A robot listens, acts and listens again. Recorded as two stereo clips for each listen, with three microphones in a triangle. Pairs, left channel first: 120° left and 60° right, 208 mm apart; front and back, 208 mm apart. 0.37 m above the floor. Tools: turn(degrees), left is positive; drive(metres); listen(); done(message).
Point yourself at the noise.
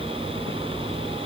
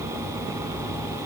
listen()
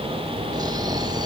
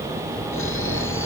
turn(degrees=10)
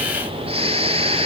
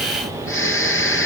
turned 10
done("Found it: snoring, straight ahead, 1 to 2 m away.")